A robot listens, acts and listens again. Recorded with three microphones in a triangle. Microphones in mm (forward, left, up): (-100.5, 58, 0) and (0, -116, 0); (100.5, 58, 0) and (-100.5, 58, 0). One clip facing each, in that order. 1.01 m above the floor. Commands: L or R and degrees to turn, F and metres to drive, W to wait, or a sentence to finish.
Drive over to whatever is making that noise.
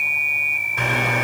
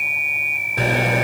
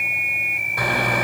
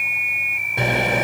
R115
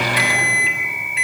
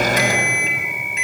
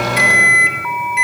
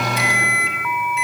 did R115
R15
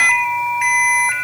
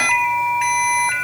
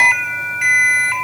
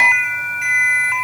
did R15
F1.0
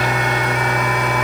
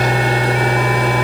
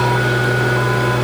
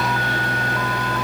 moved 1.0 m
F1.0
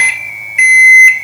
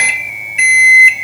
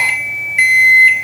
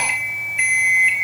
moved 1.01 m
F1.0
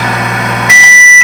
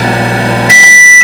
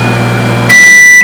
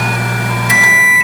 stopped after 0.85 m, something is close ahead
Arrived at the microwave, straight ahead.